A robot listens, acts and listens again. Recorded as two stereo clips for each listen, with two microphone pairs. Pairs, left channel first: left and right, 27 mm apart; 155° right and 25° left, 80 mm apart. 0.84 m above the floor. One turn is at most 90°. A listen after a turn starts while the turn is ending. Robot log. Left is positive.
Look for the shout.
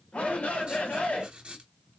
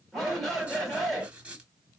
note: The shout: 115° left.
cmd yaw +90
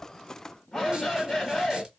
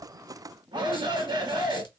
note: The shout is now 15° left.
cmd yaw +15
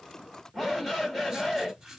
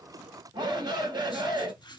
end: Facing the shout.